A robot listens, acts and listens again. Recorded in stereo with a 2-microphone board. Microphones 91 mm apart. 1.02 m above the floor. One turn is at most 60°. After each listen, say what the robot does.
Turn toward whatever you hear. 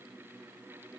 Keep listening.
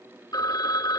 Turn 45° left.
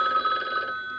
Found it: a phone ringing, straight ahead.